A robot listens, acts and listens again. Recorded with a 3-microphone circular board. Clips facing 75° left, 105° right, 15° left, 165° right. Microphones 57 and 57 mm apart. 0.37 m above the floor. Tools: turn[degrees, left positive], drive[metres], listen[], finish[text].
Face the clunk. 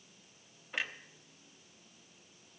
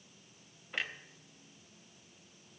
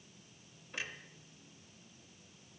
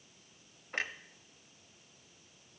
Thought: The clunk: 165° left.
Action: turn[165]
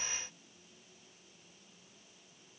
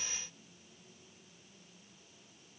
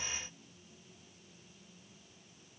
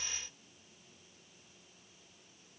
Action: finish[I heard a clunk from this way, but can't make it out now.]